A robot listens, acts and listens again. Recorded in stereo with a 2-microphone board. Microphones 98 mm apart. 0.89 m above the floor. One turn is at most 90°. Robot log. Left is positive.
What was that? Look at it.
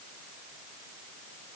cmd idle
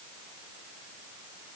cmd idle
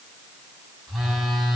cmd yaw +30
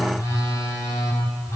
note: So it is at 150° left.
cmd yaw +90
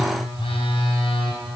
note: The phone buzzing is now 65° left.
cmd yaw +65
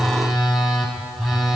end: Found it: a phone buzzing, straight ahead.